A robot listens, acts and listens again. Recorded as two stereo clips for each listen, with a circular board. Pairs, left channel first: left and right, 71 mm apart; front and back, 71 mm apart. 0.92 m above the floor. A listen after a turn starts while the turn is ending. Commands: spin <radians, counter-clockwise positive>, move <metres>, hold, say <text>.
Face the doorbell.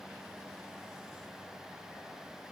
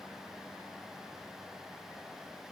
hold
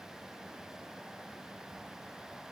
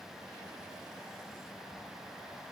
hold
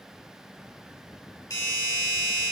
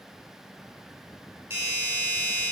spin 2.09
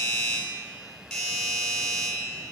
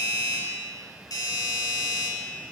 say Facing the doorbell.